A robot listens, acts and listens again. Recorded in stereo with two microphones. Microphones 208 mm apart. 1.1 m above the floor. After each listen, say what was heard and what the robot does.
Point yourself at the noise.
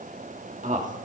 The man speaking: about 35° right or 145° right. Turn 35° right.
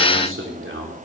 So it is at 110° right. Turn 110° right.
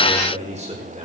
The man speaking is now 30° right. Turn 30° right.
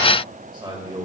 The man speaking is now 20° right. Turn 20° right.
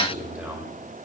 Facing the man speaking.